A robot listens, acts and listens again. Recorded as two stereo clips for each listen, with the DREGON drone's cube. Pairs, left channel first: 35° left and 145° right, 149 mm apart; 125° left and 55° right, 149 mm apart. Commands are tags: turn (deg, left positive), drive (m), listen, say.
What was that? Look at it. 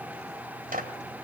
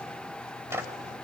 <turn deg="-130"/>
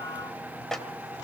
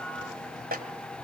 <turn deg="-55"/>
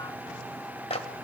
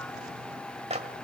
<turn deg="-15"/>
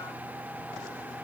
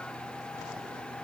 <listen/>
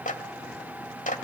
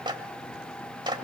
<say>Found it: a clap, straight ahead.</say>